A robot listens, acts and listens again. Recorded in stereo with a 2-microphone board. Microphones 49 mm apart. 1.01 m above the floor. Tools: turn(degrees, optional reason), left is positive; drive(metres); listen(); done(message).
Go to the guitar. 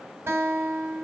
turn(degrees=-50, reason="The guitar: about 50° right or 130° right.")
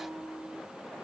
turn(degrees=-80, reason="So it is at 80° right.")
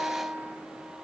turn(degrees=-25, reason="The guitar is now 25° right.")
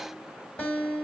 turn(degrees=20, reason="The guitar is now 20° left.")
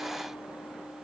listen()
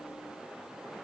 listen()
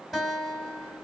drive(metres=1.0)
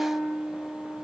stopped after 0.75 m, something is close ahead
turn(degrees=15, reason="The guitar is now 15° left.")
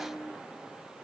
done("Something is in my way. I am facing the guitar but have not reached it.")